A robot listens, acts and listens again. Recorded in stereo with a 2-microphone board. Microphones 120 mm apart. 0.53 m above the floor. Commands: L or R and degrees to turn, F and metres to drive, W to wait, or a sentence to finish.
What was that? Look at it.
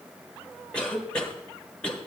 L30
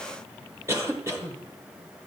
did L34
R25
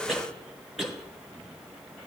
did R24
Found it: a cough, straight ahead.